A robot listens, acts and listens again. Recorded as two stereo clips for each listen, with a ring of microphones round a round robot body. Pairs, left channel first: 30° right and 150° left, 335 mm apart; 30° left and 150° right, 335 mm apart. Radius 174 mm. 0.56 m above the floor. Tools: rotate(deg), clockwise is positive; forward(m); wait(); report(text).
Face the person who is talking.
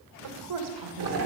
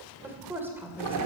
rotate(-125)
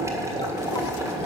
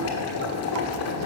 wait()
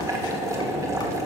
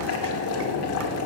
wait()
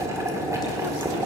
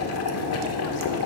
report("Facing where the woman speaking came from. I can't hear it now.")